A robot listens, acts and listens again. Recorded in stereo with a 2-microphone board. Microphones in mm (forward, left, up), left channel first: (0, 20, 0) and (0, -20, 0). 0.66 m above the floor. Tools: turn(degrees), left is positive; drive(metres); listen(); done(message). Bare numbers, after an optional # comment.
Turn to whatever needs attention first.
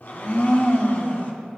listen()
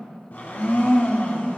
listen()
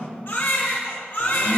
# The baby crying: about 65° left or 115° left.
turn(65)
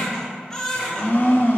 # So it is at 15° left.
turn(15)
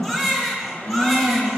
done("Found it: a baby crying, straight ahead.")